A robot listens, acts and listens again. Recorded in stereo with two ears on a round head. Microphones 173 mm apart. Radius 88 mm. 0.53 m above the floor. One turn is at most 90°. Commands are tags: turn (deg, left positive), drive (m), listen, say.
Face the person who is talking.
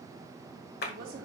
<turn deg="-55"/>
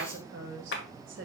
<turn deg="-65"/>
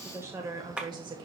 <turn deg="-25"/>
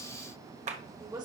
<turn deg="-20"/>
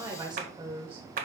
<turn deg="-30"/>
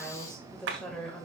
<say>Facing the woman speaking.</say>